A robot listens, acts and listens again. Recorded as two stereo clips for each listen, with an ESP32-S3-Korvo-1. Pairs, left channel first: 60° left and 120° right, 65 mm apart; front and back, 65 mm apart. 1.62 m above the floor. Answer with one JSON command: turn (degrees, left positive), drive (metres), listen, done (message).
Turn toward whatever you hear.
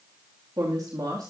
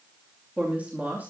{"turn": -120}
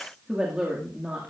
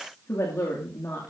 {"turn": -50}
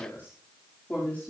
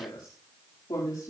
{"done": "Facing the woman speaking."}